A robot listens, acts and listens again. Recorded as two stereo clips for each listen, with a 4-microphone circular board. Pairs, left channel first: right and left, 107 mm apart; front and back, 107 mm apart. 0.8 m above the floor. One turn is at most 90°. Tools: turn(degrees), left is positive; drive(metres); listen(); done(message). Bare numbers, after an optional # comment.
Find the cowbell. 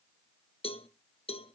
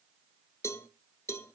# The cowbell: 65° right.
turn(-65)
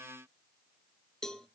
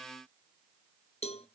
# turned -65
done("Facing the cowbell, under 1 m away.")